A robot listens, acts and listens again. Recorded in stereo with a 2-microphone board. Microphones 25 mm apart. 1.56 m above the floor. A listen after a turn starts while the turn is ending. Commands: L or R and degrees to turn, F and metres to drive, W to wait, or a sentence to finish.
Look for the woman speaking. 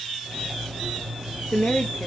L90
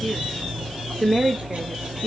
Facing the woman speaking.